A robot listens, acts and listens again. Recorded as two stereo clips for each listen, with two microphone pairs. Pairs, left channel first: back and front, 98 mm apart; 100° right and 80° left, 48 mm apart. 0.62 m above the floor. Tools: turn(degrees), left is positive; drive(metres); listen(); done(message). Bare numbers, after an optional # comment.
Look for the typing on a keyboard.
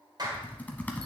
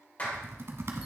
# The typing on a keyboard: 110° left.
turn(110)
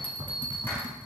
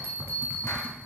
# The typing on a keyboard is now 30° left.
turn(30)
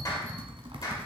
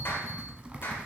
# The typing on a keyboard is now 15° left.
turn(15)
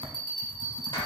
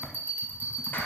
done("Found it: typing on a keyboard, straight ahead.")